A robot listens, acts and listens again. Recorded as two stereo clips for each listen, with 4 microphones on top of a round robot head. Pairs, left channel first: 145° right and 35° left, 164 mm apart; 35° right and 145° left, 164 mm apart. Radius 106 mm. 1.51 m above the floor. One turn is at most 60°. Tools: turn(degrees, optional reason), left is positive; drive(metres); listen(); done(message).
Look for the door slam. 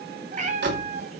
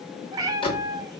turn(degrees=25, reason="The door slam: 25° left.")
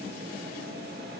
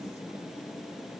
done("I heard a door slam from this way, but can't make it out now.")